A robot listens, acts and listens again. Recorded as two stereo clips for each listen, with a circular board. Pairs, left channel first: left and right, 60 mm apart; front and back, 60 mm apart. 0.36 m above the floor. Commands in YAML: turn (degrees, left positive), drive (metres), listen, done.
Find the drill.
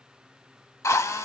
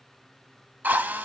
turn: 125
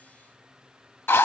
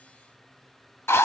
turn: 45
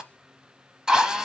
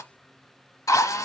turn: -10
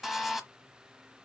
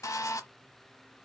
done: "Facing the drill."